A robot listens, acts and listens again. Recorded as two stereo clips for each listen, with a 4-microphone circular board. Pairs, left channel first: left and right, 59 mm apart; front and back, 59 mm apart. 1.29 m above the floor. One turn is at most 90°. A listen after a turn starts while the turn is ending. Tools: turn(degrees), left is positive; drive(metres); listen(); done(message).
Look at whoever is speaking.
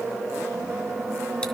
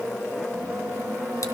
listen()
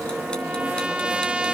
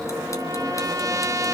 listen()
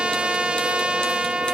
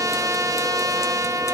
done("I can't make out anyone speaking, only a trumpet.")